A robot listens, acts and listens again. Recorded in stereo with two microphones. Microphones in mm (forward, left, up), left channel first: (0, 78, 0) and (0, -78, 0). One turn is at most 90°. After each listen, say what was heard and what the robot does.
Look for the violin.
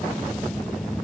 Keep listening.
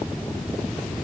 Keep listening.
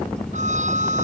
The violin: about 50° right or 130° right. Turn 50° right.
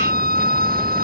So it is at 80° right. Turn 80° right.
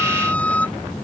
The violin is now 10° left. Turn 10° left.
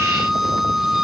Facing the violin.